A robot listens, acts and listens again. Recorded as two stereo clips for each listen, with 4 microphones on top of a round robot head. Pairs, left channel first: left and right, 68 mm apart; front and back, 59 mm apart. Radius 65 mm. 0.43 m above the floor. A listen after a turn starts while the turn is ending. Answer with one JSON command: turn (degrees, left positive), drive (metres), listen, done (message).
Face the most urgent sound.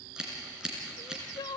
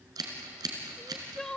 {"turn": 80}
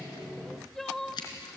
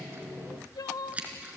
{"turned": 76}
{"done": "Found it: crying, straight ahead, under 1 m away."}